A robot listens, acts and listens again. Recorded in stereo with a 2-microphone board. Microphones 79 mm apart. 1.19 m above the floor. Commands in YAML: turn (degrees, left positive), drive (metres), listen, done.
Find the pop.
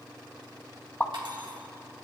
turn: 25
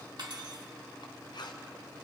listen: true
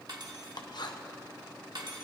done: "I heard a pop, but can't make it out now. It was about straight ahead or 130° left."